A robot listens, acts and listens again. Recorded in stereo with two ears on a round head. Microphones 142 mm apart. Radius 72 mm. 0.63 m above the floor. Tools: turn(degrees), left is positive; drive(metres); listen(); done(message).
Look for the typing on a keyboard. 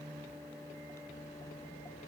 listen()
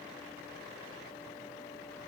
listen()
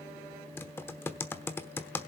turn(degrees=30)
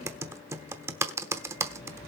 turn(degrees=-15)
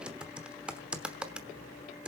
done("Found it: typing on a keyboard, straight ahead.")